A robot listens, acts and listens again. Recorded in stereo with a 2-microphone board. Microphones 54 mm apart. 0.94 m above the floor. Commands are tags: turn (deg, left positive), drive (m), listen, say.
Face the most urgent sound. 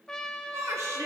<turn deg="-65"/>
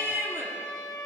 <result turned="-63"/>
<turn deg="-50"/>
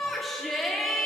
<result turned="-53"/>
<say>Found it: a shout, straight ahead, 1 to 2 m away.</say>